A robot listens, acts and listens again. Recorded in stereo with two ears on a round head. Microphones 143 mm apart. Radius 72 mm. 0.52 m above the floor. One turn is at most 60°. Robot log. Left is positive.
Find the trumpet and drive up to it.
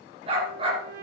note: The trumpet: about 60° right or 120° right.
cmd yaw -60
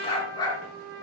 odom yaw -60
note: So it is at 65° right.
cmd yaw -60
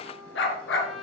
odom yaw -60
cmd fwd 1.0
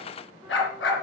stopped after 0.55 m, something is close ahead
cmd idle
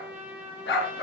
note: The trumpet is now 10° right.
cmd yaw -10
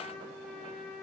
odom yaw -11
end: Something is in my way. I am facing the trumpet but have not reached it.